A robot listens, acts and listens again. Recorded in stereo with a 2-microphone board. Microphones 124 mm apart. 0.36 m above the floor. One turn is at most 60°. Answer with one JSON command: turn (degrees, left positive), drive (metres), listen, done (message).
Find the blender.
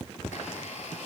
{"turn": 60}
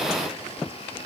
{"listen": true}
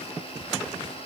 {"turn": 50}
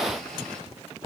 {"listen": true}
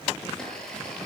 {"done": "Found it: a blender, straight ahead, over 4 m away."}